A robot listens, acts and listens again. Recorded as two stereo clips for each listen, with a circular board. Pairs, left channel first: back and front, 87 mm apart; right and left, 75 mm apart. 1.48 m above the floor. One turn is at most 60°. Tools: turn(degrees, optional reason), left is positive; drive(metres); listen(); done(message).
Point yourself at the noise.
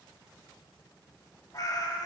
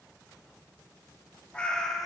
turn(degrees=-60, reason="The cat meowing: 175° right.")
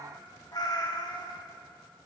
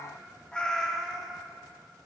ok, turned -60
turn(degrees=-60, reason="The cat meowing is now 175° right.")
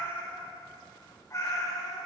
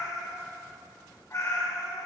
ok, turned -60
turn(degrees=-60, reason="The cat meowing is now 135° right.")
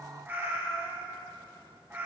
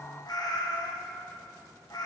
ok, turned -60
turn(degrees=-60, reason="The cat meowing is now 65° right.")
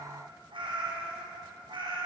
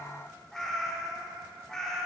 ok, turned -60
done("Facing the cat meowing, 2 to 4 m away.")